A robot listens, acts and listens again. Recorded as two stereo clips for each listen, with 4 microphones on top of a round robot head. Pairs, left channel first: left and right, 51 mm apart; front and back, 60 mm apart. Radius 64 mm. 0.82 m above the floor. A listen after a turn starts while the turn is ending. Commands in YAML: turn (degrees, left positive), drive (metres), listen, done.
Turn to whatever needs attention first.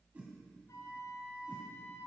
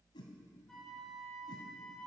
listen: true
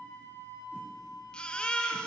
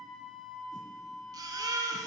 turn: 165
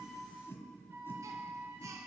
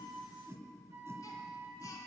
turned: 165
listen: true
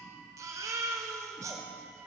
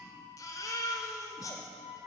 turn: -50
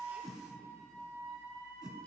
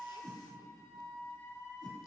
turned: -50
listen: true
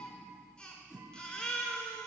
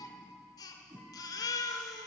turn: 15
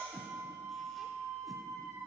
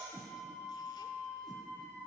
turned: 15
listen: true
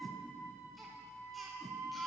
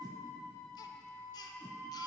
listen: true
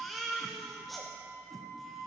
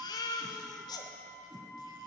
done: "Found it: a baby crying, straight ahead, under 1 m away."